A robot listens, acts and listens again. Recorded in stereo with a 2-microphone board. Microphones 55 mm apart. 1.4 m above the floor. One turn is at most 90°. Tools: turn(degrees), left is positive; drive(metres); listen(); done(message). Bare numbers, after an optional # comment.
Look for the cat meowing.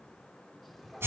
turn(30)
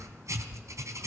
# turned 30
listen()
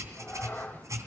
# So it is at 150° left.
turn(90)
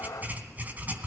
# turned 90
# The cat meowing is now 85° left.
turn(85)
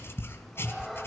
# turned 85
listen()
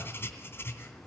listen()
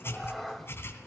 done("Facing the cat meowing.")